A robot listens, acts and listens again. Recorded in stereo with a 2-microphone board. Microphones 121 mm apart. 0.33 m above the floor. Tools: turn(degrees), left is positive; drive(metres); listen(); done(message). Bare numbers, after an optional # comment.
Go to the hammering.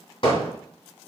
# The hammering: about 50° left or 130° left.
turn(50)
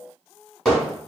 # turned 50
drive(1.0)
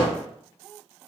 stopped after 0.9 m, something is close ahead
# The hammering is now 10° left.
turn(10)
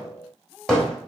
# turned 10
done("Arrived at the hammering, straight ahead.")